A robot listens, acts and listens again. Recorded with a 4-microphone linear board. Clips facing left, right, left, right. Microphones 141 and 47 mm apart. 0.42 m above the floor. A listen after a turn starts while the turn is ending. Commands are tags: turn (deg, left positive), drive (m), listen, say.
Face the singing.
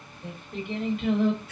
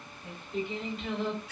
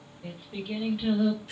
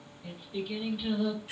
<turn deg="55"/>
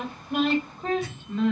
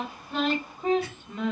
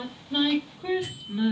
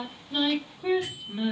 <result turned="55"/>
<turn deg="-15"/>
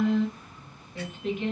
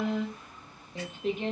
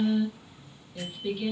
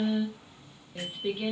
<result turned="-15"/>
<turn deg="-35"/>
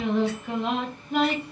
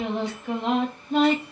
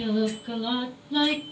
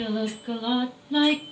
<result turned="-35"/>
<turn deg="-30"/>
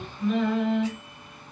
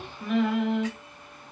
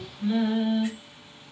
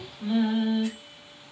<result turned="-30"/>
<turn deg="-10"/>
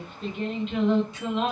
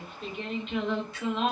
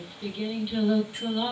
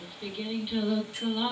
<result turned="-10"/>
<say>Found it: singing, straight ahead, 1 to 2 m away.</say>